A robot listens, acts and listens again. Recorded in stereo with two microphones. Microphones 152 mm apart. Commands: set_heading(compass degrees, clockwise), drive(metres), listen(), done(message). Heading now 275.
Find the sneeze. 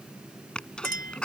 set_heading(245)
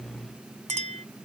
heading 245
listen()
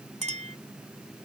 done("I heard a sneeze, but can't make it out now. It was about 25° right or 145° left.")